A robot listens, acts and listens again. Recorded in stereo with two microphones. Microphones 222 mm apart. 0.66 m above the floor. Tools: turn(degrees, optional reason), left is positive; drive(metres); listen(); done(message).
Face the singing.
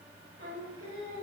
turn(degrees=-90)
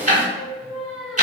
done("Found it: singing, straight ahead.")